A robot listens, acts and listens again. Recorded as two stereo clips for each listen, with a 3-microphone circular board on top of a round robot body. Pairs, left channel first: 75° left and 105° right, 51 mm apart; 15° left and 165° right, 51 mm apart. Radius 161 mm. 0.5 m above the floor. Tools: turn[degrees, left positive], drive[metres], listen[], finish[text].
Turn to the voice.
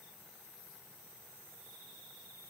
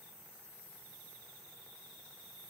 Action: listen[]
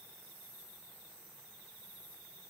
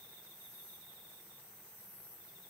Action: listen[]
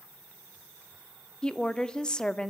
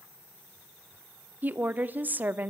Thought: The woman speaking: 145° left.
Action: turn[145]
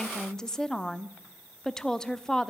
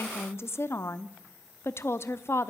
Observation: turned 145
Action: finish[Facing the woman speaking, 1 to 2 m away.]